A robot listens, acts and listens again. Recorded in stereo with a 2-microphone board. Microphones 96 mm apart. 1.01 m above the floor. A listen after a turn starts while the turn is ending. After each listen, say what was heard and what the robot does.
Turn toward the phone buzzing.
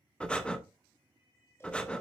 Keep listening.
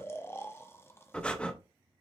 Keep listening.
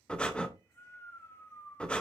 I can't make out a phone buzzing to turn to.